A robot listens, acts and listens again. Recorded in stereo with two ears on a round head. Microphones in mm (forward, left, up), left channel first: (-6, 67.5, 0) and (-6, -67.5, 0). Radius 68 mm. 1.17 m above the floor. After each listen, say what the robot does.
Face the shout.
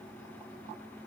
Keep listening.
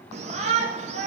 Turn 45° right.
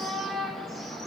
Found it: a shout, straight ahead, 1 to 2 m away.